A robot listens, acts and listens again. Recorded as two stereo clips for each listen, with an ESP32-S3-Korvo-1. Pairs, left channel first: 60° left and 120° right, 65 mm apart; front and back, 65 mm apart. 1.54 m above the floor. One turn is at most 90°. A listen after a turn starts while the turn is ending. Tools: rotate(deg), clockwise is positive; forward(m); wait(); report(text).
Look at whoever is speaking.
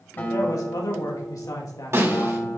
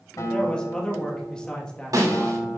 rotate(-75)
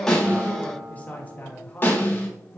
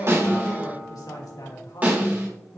report("Facing the man speaking.")